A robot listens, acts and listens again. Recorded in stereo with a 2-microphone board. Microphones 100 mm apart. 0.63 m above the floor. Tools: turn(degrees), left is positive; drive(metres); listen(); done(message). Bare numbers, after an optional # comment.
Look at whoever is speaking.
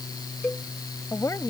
# The woman speaking: about 30° left or 150° left.
turn(30)
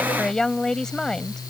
done("Facing the woman speaking.")